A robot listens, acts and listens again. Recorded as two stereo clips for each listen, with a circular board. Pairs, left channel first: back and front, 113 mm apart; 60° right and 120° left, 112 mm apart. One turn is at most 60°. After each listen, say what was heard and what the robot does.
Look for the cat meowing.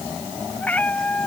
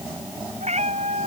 The cat meowing: 105° left. Turn 60° left.
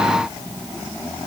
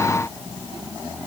Nothing new. It was at 45° left. Turn 45° left.
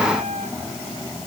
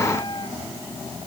The cat meowing is now 10° right. Turn 10° right.
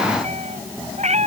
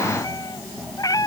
Facing the cat meowing.